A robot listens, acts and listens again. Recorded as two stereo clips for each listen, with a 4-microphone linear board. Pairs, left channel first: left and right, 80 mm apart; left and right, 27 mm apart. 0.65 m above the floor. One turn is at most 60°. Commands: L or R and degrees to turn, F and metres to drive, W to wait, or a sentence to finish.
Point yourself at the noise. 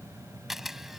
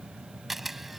R30
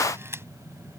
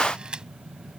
R60
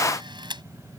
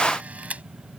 R60
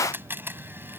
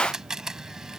R25
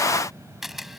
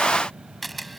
Found it: a camera shutter, straight ahead.